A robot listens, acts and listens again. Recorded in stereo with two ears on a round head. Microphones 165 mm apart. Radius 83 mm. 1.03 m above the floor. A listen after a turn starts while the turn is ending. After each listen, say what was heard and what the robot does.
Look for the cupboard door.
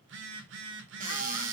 The cupboard door: about 40° right or 140° right. Turn 40° right.
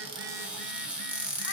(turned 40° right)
Facing the cupboard door.